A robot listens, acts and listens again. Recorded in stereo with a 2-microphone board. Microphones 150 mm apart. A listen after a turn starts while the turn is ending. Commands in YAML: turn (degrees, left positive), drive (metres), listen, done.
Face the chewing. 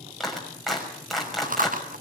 turn: -65
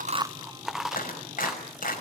done: "Found it: chewing, straight ahead."